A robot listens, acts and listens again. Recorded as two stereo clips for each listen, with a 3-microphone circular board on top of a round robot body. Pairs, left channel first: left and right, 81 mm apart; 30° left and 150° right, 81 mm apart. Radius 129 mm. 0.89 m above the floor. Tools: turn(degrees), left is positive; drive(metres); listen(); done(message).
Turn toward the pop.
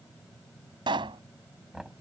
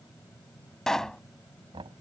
turn(degrees=-55)
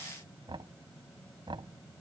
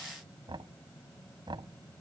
done("I heard a pop from this way, but can't make it out now.")